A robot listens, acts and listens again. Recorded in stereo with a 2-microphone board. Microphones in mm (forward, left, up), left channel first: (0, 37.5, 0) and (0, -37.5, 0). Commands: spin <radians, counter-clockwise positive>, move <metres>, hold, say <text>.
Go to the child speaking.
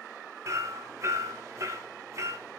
hold
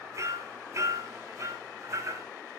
hold
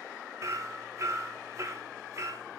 say I can't make out a child speaking to turn to.